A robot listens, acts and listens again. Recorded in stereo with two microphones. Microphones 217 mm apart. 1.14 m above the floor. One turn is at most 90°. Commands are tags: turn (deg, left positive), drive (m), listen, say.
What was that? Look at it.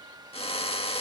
<turn deg="25"/>
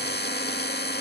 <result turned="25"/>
<turn deg="90"/>
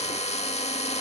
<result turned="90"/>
<turn deg="30"/>
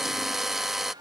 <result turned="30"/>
<say>Found it: a drill, straight ahead.</say>